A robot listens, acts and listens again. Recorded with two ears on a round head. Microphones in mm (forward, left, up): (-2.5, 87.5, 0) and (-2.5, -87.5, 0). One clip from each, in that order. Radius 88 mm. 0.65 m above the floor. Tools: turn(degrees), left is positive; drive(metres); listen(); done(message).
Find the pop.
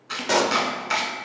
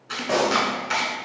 turn(degrees=75)
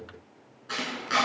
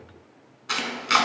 listen()
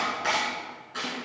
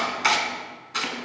done("I heard a pop, but can't make it out now. It was about straight ahead or 30° left.")